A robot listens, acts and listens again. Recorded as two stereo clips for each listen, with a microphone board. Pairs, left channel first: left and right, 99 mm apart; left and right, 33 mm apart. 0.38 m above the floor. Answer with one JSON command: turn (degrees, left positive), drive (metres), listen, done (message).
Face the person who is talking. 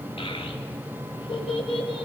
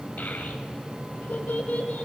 {"turn": 65}
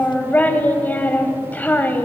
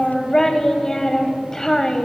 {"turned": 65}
{"turn": 20}
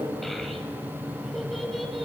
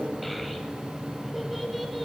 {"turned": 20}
{"listen": true}
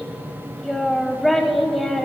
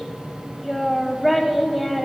{"done": "Found it: a child speaking, straight ahead."}